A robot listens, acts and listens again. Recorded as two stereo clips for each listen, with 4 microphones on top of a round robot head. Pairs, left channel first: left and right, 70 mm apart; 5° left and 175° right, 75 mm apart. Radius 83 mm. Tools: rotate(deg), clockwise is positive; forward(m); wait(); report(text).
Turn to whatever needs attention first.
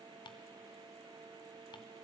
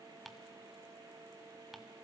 wait()
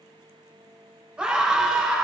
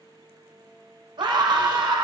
rotate(165)
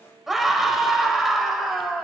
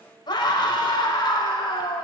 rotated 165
report("Found it: a scream, straight ahead.")